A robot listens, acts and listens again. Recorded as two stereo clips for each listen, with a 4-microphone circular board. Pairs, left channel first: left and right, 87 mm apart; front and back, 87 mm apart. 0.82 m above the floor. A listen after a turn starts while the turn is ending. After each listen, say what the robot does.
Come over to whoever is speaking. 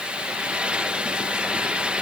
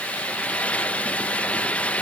Keep listening.
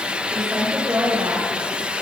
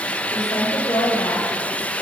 Turn 40° right.
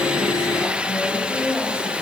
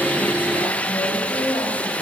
Turn 10° left.
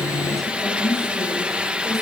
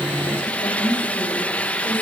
Drive 1.0 m forward.
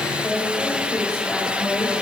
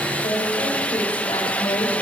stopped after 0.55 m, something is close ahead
Blocked. The woman speaking is further on, straight ahead.